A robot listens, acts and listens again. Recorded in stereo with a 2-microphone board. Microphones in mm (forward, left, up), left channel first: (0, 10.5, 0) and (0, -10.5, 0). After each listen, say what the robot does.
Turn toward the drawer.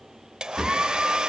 Turn 30° left.
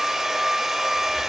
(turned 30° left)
Keep listening.
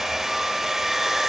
Keep listening.
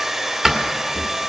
Turn 15° right.
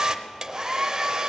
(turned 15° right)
Keep listening.
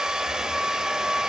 Keep listening.
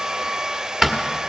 Facing the drawer.